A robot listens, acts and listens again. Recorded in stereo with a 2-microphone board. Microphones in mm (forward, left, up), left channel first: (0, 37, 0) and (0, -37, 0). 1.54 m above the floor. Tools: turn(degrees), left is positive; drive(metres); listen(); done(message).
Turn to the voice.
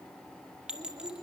turn(degrees=-90)
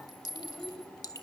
turn(degrees=10)
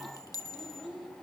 done("Found it: a child speaking, straight ahead.")